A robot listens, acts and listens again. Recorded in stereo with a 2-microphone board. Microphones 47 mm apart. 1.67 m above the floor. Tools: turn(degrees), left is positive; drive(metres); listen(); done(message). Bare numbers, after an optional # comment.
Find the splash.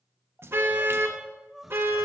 # The splash: about 55° right or 125° right.
turn(-55)
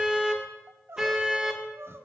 listen()
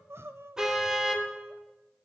done("I heard a splash, but can't make it out now. It was about straight ahead or 70° right.")